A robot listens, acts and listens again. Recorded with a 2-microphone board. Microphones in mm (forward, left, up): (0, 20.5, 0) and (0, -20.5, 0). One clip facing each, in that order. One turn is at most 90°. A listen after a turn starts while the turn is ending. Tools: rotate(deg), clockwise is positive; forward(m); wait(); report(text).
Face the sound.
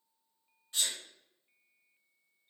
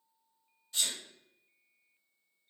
rotate(-30)
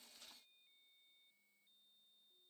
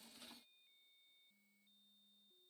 wait()
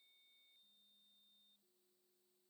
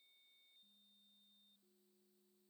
report("I heard a sneeze, but can't make it out now. It was about straight ahead or 120° left.")